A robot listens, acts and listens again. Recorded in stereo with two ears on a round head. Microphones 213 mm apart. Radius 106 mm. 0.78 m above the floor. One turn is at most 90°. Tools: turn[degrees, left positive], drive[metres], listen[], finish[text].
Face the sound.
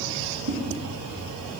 Action: listen[]
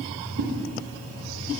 Thought: The whoosh: about 40° right or 140° right.
Action: turn[-40]
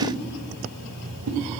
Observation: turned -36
Thought: So it is at 105° right.
Action: turn[-90]
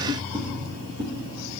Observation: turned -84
Thought: The whoosh is now 20° right.
Action: turn[-20]
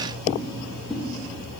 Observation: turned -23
Action: finish[Found it: a whoosh, straight ahead, under 1 m away.]